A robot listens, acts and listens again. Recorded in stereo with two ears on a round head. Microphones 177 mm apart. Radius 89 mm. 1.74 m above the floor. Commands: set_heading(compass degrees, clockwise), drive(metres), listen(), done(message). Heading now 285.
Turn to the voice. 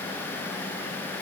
listen()
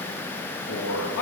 set_heading(195)
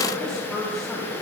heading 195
done("Found it: a man speaking, straight ahead, 2 to 4 m away.")